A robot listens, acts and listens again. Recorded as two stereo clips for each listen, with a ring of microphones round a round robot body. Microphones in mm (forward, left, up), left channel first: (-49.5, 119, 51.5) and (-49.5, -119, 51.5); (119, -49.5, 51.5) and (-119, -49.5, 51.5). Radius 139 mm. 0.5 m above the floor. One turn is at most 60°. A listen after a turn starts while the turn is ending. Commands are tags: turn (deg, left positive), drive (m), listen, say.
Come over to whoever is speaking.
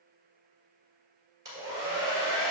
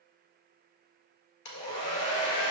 <listen/>
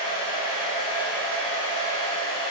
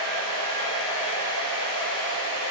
<listen/>
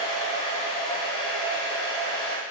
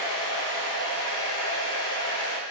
<say>I can't make out anyone speaking, only a hair dryer.</say>